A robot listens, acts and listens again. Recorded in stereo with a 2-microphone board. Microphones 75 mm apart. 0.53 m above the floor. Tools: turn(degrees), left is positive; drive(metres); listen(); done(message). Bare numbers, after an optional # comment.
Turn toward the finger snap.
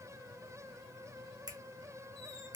# The finger snap: about 55° right or 125° right.
turn(-55)
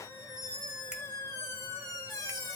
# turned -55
listen()
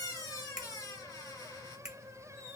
# So it is at 15° right.
turn(-15)
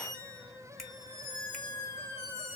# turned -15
listen()
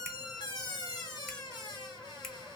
listen()
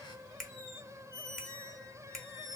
done("Facing the finger snap, 1 to 2 m away.")